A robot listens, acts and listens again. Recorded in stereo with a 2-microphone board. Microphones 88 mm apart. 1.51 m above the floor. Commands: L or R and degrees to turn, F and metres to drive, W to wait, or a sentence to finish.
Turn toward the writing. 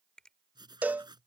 R55
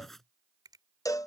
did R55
Facing the writing.